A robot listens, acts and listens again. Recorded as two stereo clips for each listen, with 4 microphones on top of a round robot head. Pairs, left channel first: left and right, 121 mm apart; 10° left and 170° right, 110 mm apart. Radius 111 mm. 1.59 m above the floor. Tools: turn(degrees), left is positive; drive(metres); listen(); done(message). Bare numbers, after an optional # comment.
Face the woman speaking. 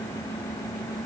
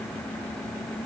listen()
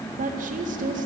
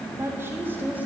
# The woman speaking: 95° right.
turn(-95)
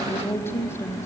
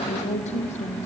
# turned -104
# The woman speaking is now 20° left.
turn(20)
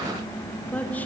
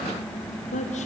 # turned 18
# The woman speaking is now 15° left.
turn(15)
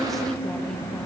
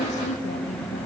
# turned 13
done("Facing the woman speaking.")